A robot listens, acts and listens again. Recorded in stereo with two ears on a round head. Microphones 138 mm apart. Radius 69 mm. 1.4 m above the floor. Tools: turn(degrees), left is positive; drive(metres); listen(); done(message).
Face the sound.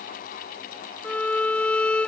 turn(degrees=30)
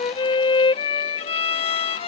turn(degrees=140)
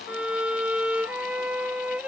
done("Facing the violin.")